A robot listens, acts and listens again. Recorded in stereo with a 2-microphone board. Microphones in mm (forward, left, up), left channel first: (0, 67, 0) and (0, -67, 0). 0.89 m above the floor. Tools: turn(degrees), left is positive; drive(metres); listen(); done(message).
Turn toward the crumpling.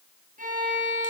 listen()
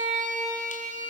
listen()
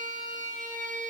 done("I can't make out crumpling to turn to.")